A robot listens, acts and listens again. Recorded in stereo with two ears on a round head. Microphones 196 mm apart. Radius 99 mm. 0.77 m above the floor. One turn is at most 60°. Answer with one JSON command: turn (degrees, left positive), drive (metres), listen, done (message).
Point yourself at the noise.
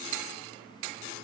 {"listen": true}
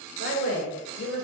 {"turn": 60}
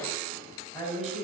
{"turn": 25}
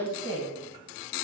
{"turn": 20}
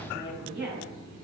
{"done": "Facing the woman speaking."}